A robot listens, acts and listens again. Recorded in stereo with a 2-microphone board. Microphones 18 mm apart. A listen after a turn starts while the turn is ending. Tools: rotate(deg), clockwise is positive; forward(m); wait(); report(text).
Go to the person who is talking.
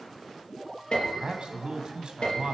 rotate(60)
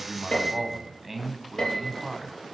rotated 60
rotate(20)
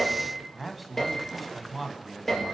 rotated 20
forward(1.0)
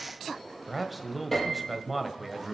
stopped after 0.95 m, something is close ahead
rotate(10)
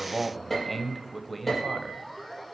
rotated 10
report("I am next to the man speaking.")